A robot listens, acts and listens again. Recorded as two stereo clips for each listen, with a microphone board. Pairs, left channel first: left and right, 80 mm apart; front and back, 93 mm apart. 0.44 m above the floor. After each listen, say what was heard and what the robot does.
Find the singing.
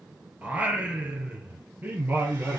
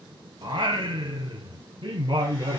The singing: 155° right. Turn 155° right.
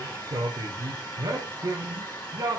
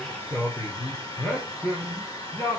The singing is now 55° right. Turn 55° right.
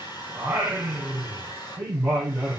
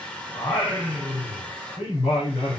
The singing is now 10° right. Turn 10° right.
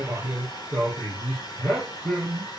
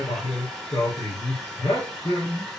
Facing the singing, over 4 m away.